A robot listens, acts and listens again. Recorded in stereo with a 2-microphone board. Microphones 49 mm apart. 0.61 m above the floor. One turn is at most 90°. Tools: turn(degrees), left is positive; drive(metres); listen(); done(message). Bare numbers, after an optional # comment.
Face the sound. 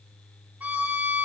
# The violin: about 45° right or 135° right.
turn(-45)
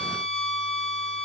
done("Found it: a violin, straight ahead, 2 to 4 m away.")